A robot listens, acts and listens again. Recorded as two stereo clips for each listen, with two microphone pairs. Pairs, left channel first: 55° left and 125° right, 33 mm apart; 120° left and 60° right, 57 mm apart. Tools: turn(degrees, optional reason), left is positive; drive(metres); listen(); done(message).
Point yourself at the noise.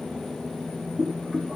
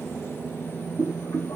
turn(degrees=145, reason="The boiling: 145° left.")
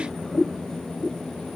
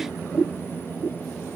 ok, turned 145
done("Found it: boiling, straight ahead, 2 to 4 m away.")